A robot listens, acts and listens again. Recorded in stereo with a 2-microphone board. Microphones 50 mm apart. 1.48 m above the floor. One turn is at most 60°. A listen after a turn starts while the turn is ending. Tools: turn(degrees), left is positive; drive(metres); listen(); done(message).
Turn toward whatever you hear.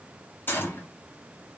turn(degrees=45)
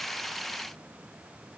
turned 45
listen()
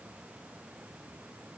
done("I heard a gunshot, but can't make it out now. It was about straight ahead or 90° left.")